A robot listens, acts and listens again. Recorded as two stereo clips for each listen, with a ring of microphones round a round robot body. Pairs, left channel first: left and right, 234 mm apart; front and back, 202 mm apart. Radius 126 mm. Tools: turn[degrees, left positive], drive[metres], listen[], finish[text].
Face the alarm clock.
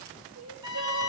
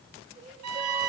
Action: listen[]
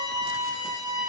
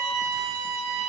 Action: listen[]
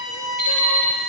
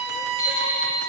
Thought: The alarm clock: 30° right.
Action: turn[-30]
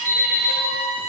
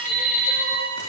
Action: finish[Found it: an alarm clock, straight ahead.]